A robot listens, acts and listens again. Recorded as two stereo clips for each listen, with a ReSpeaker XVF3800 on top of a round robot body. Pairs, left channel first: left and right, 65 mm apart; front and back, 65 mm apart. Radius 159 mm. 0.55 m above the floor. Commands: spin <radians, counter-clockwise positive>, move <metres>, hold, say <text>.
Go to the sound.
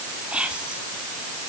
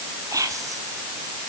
spin -2.79
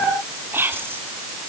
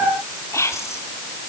spin -0.70
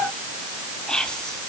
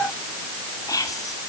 spin 0.26
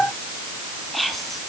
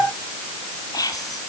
move 1.0
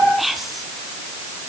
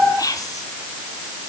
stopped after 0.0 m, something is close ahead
say Blocked. The whispering is further on, straight ahead.